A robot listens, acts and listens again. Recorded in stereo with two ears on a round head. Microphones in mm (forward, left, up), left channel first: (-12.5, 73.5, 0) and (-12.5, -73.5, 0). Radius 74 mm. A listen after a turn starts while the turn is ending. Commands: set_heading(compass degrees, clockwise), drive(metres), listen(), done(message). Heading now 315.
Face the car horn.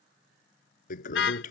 set_heading(225)
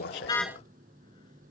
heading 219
listen()
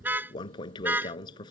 set_heading(229)
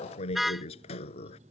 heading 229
done("Found it: a car horn, straight ahead.")